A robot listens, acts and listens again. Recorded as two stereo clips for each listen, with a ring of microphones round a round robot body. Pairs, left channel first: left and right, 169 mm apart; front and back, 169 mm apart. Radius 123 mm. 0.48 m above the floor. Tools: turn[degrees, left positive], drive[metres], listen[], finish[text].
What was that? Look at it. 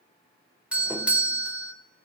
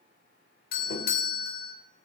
Thought: The doorbell: 10° right.
Action: turn[-10]
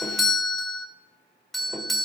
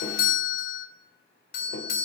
Action: finish[Found it: a doorbell, straight ahead.]